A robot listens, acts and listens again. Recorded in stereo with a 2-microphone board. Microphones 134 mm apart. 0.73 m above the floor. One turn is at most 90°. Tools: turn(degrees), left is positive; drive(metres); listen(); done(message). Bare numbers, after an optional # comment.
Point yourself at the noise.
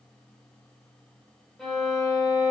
turn(30)
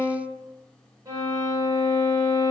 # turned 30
# So it is at 25° right.
turn(-25)
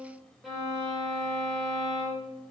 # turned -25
done("Facing the violin.")